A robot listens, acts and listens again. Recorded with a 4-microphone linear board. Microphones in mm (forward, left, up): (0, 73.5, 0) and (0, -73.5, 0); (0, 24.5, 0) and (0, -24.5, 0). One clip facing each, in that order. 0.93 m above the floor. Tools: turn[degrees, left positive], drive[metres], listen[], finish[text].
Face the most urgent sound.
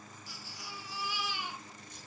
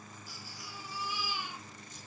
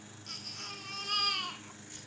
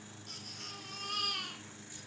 Action: turn[90]
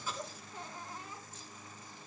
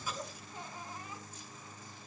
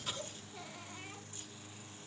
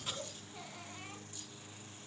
Thought: So it is at 10° right.
Action: turn[-10]
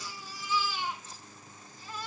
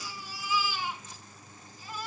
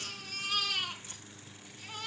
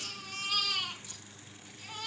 Action: finish[Found it: a baby crying, straight ahead.]